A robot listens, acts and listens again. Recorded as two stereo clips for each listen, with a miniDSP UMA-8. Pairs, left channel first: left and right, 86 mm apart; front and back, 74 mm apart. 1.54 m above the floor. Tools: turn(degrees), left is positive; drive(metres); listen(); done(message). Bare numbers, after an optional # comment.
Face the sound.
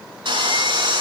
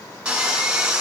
# The sawing: 105° right.
turn(-105)
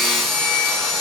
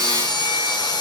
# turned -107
done("Found it: sawing, straight ahead, over 4 m away.")